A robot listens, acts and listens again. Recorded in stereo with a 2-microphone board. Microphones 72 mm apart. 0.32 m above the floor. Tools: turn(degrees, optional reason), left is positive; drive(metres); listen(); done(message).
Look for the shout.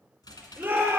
turn(degrees=-20, reason="The shout: about 20° right or 160° right.")
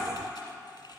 listen()
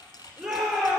done("Facing the shout, over 4 m away.")